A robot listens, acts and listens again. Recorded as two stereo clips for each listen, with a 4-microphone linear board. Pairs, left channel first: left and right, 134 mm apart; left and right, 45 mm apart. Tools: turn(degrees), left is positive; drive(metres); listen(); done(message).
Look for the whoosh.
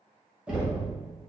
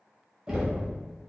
listen()
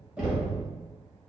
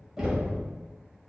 listen()
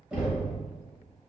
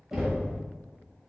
done("I can't make out a whoosh to turn to.")